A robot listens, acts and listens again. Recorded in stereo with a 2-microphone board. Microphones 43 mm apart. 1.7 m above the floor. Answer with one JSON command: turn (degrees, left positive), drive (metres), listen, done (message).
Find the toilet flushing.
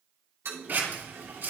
{"turn": -65}
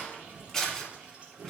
{"turn": -35}
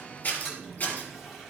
{"done": "Found it: a toilet flushing, straight ahead."}